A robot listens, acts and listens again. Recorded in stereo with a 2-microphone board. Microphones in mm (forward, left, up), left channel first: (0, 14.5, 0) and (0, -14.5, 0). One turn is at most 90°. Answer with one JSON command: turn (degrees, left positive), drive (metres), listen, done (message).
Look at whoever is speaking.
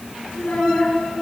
{"turn": 60}
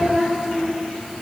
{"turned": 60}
{"done": "Facing the child speaking."}